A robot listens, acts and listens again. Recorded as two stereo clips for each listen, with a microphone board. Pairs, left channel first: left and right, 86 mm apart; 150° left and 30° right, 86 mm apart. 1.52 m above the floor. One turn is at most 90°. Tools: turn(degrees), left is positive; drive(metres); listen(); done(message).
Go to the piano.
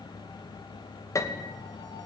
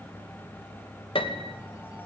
turn(degrees=90)
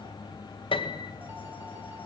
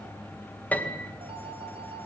turn(degrees=80)
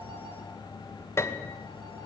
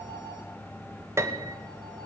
turn(degrees=30)
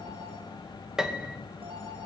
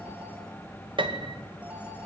drive(metres=1.0)
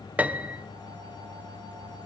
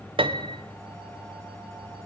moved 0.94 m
turn(degrees=-15)
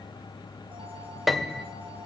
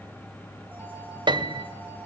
drive(metres=1.0)
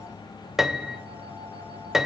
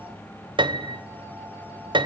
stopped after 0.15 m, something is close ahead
done("Arrived at the piano, straight ahead.")